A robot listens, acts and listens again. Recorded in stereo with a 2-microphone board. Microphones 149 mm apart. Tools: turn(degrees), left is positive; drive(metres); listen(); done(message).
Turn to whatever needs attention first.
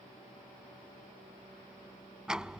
listen()
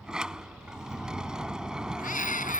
turn(degrees=65)
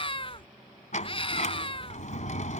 turn(degrees=40)
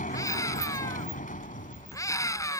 turn(degrees=25)
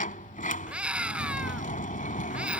turn(degrees=-10)
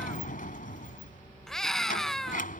done("Found it: a scream, straight ahead.")